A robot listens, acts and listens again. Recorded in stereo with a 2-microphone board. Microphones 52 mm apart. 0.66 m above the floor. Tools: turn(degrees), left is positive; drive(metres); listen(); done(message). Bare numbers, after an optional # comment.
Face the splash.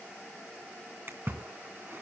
# The splash: about 50° right or 130° right.
turn(-50)
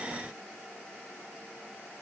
listen()
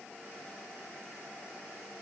done("I heard a splash, but can't make it out now. It was about straight ahead or 80° right.")